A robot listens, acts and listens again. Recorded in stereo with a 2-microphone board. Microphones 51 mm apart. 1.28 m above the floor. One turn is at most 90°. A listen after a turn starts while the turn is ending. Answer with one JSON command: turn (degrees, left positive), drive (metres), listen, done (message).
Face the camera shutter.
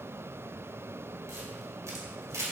{"turn": -90}
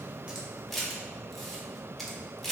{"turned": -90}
{"done": "Facing the camera shutter, 1 to 2 m away."}